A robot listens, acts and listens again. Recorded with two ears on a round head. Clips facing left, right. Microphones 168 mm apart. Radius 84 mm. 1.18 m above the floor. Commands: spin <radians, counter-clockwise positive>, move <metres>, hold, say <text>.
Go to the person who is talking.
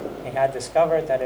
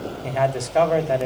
spin 0.52
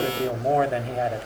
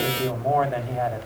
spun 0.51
spin 2.62
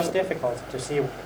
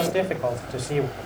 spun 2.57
move 1.0
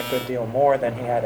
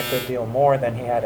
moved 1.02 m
move 1.0
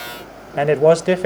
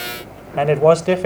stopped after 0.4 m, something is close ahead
spin 0.26
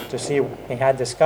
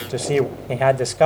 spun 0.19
say Arrived at the man speaking, straight ahead.